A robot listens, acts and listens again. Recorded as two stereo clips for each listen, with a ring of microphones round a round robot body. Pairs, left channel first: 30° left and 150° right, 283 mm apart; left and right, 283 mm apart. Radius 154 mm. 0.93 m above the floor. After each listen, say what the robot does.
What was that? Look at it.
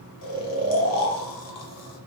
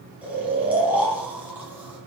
Facing the snoring, under 1 m away.